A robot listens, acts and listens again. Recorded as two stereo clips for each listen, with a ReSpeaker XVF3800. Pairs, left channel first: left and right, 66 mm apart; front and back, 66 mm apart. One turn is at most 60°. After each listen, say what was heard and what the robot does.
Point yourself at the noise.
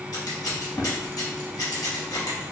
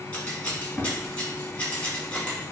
The scissors: 70° left. Turn 60° left.
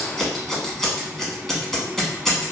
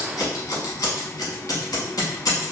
Facing the scissors.